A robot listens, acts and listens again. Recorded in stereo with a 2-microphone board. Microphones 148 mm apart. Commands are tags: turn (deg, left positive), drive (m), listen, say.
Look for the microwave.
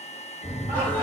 <turn deg="-45"/>
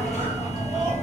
<turn deg="-90"/>
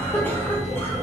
<turn deg="20"/>
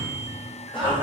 <say>Facing the microwave, 1 to 2 m away.</say>